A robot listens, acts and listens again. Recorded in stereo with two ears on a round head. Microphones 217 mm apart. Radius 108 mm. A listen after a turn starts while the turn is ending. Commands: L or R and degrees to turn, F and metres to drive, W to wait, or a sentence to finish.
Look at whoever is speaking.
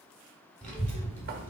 L30
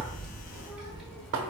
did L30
L30
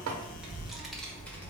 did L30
L30
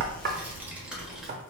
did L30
L30
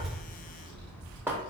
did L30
R20
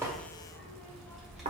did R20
Facing the child speaking.